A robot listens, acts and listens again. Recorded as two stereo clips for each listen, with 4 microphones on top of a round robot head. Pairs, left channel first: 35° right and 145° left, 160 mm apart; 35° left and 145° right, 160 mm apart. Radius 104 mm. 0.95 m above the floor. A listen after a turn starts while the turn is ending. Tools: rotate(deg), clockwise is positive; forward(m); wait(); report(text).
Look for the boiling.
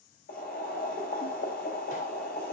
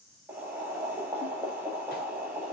rotate(65)
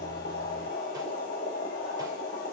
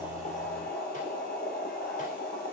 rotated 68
report("Facing the boiling, over 4 m away.")